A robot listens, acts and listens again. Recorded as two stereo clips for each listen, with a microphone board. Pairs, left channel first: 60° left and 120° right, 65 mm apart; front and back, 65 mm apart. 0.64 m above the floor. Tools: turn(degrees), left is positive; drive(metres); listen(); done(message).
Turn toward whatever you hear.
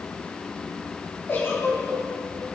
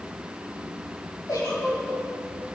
turn(degrees=10)
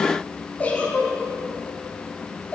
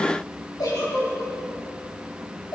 done("Found it: a giggle, straight ahead.")